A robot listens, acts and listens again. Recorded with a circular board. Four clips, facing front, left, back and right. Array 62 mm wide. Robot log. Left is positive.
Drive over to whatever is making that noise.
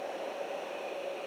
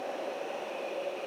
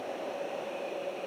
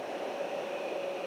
cmd idle
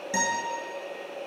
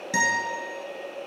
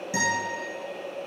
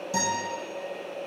note: The guitar: 70° left.
cmd yaw +70
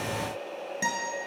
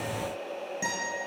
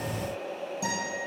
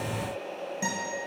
cmd fwd 1.0
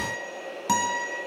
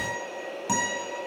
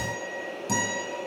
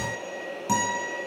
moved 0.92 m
cmd fwd 1.0
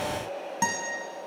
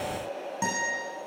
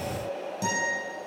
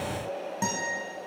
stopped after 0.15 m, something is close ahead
end: Arrived at the guitar, straight ahead.